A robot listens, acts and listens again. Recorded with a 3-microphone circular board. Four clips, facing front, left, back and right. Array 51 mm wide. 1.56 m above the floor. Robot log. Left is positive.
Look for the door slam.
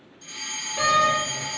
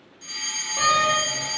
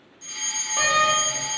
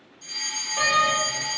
note: The door slam: 175° left.
cmd yaw +175
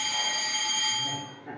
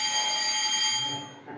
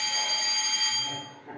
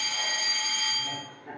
end: I heard a door slam from this way, but can't make it out now.